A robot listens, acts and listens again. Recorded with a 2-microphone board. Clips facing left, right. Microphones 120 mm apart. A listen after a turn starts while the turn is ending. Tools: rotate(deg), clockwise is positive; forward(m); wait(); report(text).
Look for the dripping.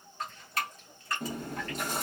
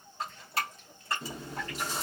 rotate(30)
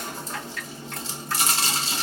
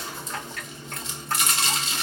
wait()
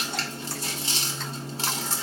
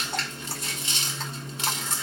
wait()
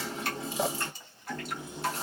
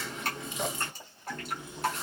rotate(115)
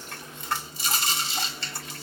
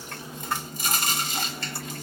wait()
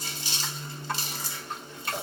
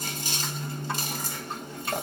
wait()
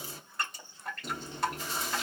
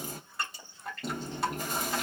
report("Found it: dripping, straight ahead.")